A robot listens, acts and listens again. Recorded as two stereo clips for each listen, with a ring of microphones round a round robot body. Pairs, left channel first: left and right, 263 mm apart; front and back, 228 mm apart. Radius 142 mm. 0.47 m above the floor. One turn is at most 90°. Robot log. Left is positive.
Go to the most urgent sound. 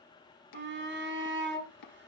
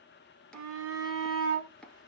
note: The shout: 140° right.
cmd yaw -90
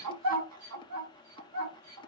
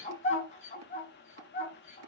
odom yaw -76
note: The shout is now 65° right.
cmd yaw -65
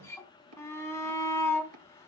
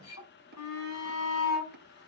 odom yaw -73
note: The shout is now 10° left.
cmd yaw +10
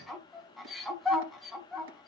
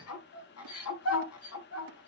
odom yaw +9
cmd fwd 1.0
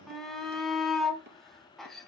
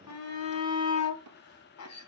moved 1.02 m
cmd fwd 1.0
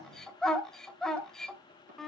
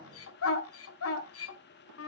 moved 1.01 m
cmd fwd 1.0
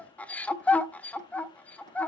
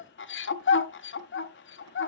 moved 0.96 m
cmd fwd 1.0
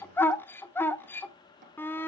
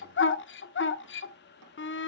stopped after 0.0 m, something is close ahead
note: The shout is now 10° left.
cmd yaw +10
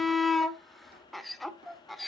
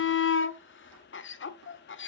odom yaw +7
end: I am next to the shout.